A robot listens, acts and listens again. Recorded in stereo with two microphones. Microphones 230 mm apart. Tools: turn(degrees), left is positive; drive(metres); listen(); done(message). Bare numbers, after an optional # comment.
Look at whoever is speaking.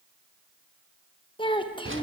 # The child speaking: about 20° left or 160° left.
turn(20)
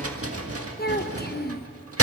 # So it is at 135° left.
turn(135)
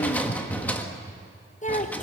# The child speaking is now 30° left.
turn(30)
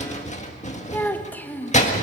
# The child speaking is now 10° left.
turn(10)
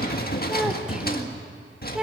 done("Found it: a child speaking, straight ahead, 1 to 2 m away.")